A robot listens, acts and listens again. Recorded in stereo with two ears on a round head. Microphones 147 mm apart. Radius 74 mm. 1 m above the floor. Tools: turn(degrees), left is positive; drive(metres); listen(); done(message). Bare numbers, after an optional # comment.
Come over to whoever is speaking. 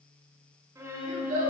# The child speaking: about 60° right or 120° right.
turn(-60)
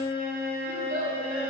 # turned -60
# So it is at 60° right.
turn(-60)
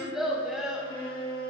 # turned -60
drive(1.0)
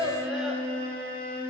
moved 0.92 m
drive(1.0)
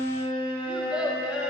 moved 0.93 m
drive(1.0)
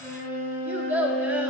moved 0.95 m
# The child speaking is now 10° right.
turn(-10)
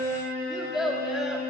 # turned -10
drive(1.0)
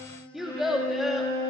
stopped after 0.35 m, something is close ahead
done("Arrived at the child speaking, straight ahead.")